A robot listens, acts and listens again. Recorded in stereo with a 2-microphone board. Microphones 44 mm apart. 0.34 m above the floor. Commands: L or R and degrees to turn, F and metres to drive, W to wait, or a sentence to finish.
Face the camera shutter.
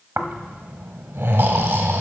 W
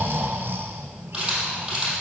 R30
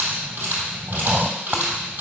R135
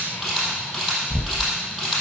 Facing the camera shutter.